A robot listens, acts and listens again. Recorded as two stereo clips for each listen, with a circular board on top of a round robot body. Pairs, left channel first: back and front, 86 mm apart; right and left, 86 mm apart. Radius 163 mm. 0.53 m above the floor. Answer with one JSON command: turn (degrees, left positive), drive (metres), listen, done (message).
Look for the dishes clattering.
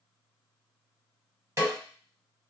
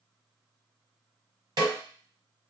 {"listen": true}
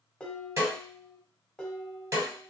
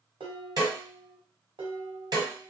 {"turn": 100}
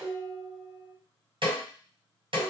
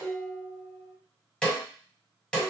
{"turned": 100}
{"turn": 35}
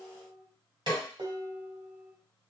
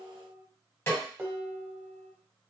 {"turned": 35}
{"turn": 15}
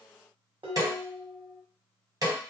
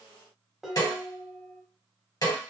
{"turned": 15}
{"done": "Found it: dishes clattering, straight ahead."}